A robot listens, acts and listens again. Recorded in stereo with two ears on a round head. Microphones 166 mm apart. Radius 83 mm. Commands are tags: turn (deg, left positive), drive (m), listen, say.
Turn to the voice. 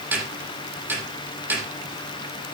<listen/>
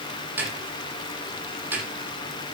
<listen/>
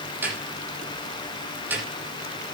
<say>I can't make out anyone speaking to turn to.</say>